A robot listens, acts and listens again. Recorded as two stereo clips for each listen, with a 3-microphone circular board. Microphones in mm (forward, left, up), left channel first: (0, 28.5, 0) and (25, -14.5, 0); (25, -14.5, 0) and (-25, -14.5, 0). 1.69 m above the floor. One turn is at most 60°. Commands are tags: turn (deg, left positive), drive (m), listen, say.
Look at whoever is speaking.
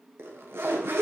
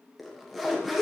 <listen/>
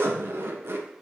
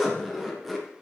<listen/>
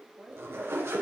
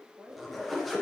<turn deg="-60"/>
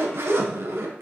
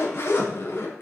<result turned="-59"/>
<turn deg="-60"/>
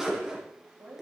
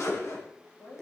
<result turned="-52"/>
<turn deg="-20"/>
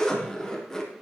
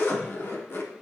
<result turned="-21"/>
<listen/>
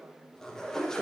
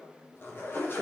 <listen/>
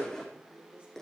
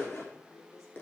<say>Facing the woman speaking.</say>